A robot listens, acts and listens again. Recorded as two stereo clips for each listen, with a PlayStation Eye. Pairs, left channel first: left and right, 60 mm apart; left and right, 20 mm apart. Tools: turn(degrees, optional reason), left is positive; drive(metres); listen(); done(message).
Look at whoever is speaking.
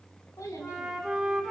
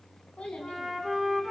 turn(degrees=70, reason="The child speaking: about 70° left or 110° left.")
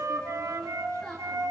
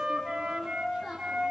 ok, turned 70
done("Facing the child speaking, 2 to 4 m away.")